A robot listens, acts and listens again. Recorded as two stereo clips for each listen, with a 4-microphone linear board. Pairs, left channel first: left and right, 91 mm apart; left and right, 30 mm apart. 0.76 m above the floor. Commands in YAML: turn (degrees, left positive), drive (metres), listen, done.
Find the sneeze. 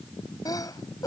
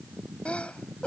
turn: 40
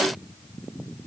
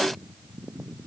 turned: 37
listen: true
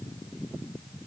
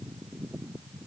done: "I heard a sneeze, but can't make it out now. It was about 5° left or 100° left."